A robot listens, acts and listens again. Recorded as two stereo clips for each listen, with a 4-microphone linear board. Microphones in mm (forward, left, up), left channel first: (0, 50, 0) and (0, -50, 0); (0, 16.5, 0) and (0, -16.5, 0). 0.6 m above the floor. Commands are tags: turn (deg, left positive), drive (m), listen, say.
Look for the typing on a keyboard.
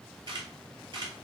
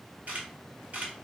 <listen/>
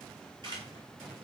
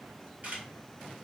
<listen/>
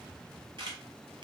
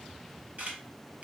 <say>I can't make out typing on a keyboard to turn to.</say>